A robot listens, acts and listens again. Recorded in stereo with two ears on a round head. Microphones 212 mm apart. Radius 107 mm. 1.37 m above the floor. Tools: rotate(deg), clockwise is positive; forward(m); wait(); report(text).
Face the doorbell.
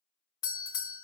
rotate(-15)
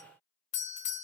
rotate(-150)
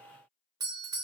rotate(15)
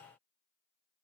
wait()
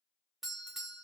report("Found it: a doorbell, straight ahead.")